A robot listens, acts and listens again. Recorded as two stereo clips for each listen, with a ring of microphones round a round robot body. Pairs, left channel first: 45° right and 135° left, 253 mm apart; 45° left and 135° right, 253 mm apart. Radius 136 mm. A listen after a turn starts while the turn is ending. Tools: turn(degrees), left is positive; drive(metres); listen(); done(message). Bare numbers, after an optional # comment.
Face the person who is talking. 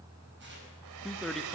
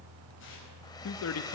# The man speaking: 45° left.
turn(45)
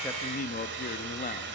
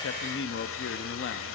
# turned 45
# The man speaking is now 10° left.
turn(10)
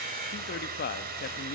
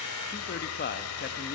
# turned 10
done("Facing the man speaking, under 1 m away.")